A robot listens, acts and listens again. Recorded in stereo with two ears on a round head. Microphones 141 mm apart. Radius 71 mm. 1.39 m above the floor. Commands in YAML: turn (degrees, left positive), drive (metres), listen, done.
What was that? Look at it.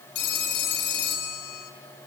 turn: 90
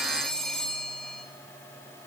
done: "Facing the phone ringing."